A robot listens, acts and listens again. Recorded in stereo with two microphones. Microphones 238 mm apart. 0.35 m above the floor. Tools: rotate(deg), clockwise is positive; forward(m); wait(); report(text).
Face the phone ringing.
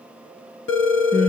rotate(-50)
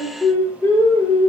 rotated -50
wait()
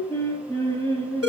rotate(-75)
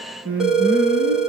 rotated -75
report("Facing the phone ringing.")